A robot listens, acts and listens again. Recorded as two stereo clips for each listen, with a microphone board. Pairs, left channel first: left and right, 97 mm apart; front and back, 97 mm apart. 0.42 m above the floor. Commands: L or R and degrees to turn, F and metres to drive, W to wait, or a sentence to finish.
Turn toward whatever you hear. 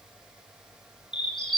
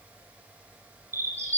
L120
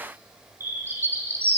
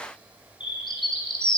R25
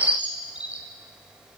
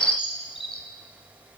R15
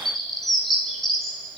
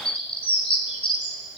Found it: a bird, straight ahead, 2 to 4 m away.